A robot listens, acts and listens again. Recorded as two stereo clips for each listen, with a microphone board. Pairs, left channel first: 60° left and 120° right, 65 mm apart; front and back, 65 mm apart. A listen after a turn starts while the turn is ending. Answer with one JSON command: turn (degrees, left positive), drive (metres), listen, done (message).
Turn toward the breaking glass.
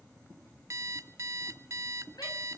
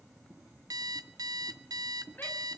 {"listen": true}
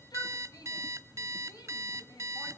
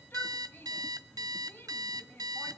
{"listen": true}
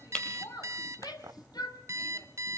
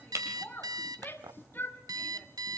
{"turn": 135}
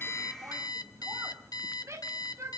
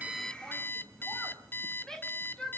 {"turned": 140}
{"done": "Facing where the breaking glass came from. I can't hear it now."}